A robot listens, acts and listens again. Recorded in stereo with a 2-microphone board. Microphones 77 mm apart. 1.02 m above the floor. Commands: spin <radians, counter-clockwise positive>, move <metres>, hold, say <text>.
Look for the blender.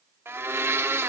spin -0.61
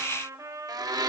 spin -1.92
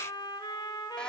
hold
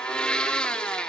spin 0.26
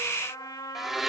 say Found it: a blender, straight ahead, under 1 m away.